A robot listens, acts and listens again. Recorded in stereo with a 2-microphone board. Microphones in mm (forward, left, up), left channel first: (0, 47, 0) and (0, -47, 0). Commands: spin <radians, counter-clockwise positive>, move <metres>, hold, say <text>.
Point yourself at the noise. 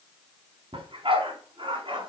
spin -1.05
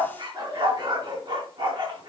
spin -1.13
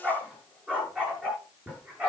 spin -0.26
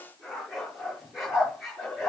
say Facing the dog barking, over 4 m away.